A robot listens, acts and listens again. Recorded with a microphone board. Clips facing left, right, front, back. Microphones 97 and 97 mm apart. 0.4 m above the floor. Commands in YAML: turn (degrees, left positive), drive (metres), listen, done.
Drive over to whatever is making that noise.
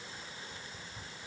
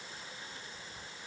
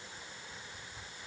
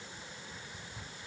listen: true
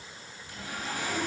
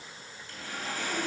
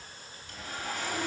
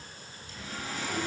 turn: 20
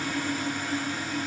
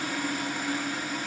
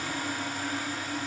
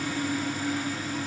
drive: 1.0
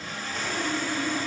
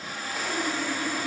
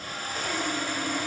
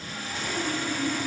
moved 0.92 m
turn: -10
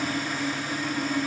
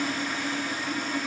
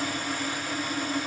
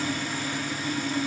drive: 1.0
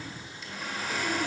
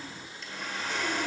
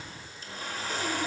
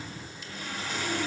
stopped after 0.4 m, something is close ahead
done: "I am next to the sawing."